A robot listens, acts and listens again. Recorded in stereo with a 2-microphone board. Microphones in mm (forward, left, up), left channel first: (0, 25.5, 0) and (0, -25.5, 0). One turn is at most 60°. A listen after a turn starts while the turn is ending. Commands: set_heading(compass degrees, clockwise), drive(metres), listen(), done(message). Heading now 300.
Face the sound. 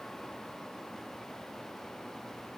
listen()
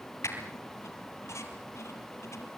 set_heading(240)
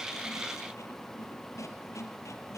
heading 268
set_heading(208)
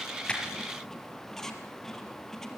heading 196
set_heading(186)
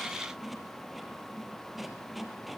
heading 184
done("Facing the squeak.")